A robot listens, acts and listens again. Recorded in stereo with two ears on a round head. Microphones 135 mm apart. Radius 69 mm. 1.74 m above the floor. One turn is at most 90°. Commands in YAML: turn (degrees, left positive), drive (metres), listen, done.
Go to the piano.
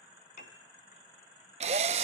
turn: 55
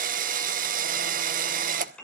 turn: 10
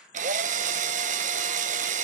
listen: true
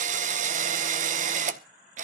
listen: true
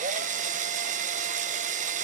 done: "I heard a piano from this way, but can't make it out now. I did not reach it."